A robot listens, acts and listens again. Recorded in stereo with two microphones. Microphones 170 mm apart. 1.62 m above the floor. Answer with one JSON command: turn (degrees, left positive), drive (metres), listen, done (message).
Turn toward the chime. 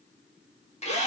{"listen": true}
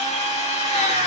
{"listen": true}
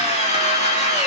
{"done": "I can't make out a chime, only a drill."}